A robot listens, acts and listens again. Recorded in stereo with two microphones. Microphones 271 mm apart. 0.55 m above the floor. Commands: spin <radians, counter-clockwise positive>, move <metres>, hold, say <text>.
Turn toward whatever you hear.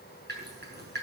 spin -0.70
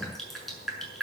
say Found it: dripping, straight ahead, over 4 m away.